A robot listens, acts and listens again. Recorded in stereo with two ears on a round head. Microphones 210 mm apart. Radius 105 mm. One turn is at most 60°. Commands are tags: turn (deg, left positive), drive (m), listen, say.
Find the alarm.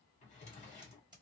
<listen/>
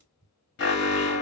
<turn deg="50"/>
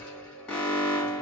<say>Facing the alarm, 1 to 2 m away.</say>